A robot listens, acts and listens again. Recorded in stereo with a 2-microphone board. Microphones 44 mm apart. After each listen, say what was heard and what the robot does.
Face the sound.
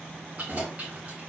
The keys jangling: about 30° right or 150° right. Turn 30° right.
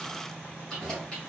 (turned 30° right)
So it is at 15° left. Turn 15° left.
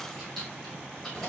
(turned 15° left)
The keys jangling is now 15° left. Turn 15° left.
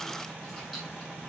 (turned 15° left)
Keep listening.
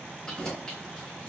The keys jangling is now 15° left. Turn 15° left.
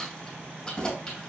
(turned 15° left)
The keys jangling is now 15° left. Turn 15° left.
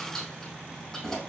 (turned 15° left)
Facing the keys jangling.